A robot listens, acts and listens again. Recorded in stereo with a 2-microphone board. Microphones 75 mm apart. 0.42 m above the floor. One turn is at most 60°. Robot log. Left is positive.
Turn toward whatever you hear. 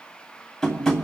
cmd yaw +30
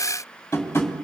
note: So it is at 145° left.
cmd yaw +60
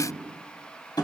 note: The tapping is now 110° left.
cmd yaw +60
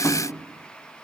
note: Nothing new. It was at 50° left.
cmd yaw +50
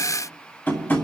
note: The tapping is now 30° left.
cmd yaw +30
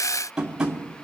note: The tapping is now 10° right.
cmd yaw -10
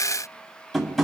end: Found it: tapping, straight ahead.